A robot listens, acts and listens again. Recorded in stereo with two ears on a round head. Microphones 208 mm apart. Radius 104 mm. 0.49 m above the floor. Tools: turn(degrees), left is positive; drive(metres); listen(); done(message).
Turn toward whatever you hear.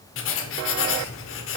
turn(degrees=60)
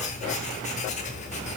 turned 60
turn(degrees=35)
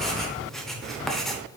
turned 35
done("Found it: writing, straight ahead, under 1 m away.")